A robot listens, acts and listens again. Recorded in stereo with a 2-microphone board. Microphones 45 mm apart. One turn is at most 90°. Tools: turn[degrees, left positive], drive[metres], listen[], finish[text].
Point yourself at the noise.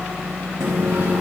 Action: turn[-90]
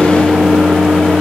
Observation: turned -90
Action: finish[Facing the microwave.]